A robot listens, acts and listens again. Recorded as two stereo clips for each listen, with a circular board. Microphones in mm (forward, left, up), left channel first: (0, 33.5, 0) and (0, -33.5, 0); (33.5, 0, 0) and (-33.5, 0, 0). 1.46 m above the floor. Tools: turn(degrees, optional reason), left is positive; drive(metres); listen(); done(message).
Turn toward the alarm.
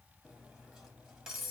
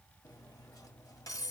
listen()
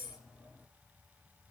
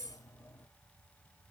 listen()
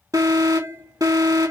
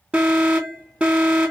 turn(degrees=-110, reason="The alarm: 110° right.")
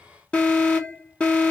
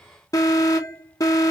turn(degrees=20, reason="The alarm is now 20° left.")
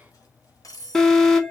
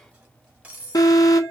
done("Facing the alarm, 1 to 2 m away.")